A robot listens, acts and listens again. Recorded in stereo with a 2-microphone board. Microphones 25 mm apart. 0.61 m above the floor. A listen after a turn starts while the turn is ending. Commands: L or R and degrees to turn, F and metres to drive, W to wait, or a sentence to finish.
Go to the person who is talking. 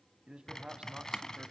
R45
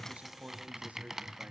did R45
R90
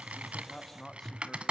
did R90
L15
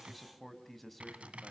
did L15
F1.0
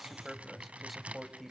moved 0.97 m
F1.0
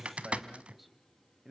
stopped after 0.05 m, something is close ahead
R10
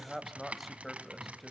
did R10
Something is in my way. I am facing the man speaking but have not reached it.